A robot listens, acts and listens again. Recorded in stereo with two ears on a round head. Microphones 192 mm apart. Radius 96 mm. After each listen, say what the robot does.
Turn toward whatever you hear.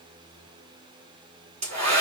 Turn 35° right.
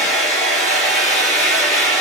Facing the hair dryer, 2 to 4 m away.